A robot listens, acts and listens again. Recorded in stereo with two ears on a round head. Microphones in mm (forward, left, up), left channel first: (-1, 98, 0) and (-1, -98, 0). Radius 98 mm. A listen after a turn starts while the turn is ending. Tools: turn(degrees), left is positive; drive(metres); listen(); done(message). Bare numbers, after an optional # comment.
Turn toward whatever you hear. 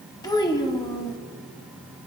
# The child speaking: about 20° left or 160° left.
turn(20)
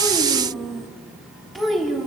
done("Found it: a child speaking, straight ahead, under 1 m away.")